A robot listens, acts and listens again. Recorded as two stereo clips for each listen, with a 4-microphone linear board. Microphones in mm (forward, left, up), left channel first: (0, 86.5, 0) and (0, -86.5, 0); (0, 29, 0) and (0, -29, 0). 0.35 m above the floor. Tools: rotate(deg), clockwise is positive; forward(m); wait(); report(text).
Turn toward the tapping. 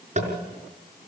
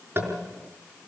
rotate(40)
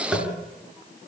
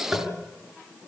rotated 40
report("Facing the tapping, over 4 m away.")